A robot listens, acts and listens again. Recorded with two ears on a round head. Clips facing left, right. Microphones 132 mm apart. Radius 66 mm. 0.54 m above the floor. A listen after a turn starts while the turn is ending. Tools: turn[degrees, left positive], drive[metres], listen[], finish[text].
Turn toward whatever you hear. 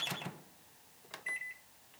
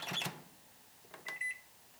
Action: listen[]
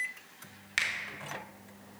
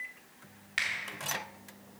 Thought: The finger snap: about 55° left or 125° left.
Action: turn[55]
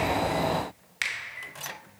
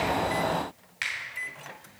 Thought: So it is at 60° left.
Action: turn[60]
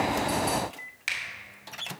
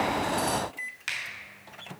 Thought: The finger snap is now 10° left.
Action: turn[10]
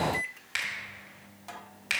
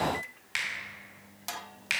Action: finish[Found it: a finger snap, straight ahead, 1 to 2 m away.]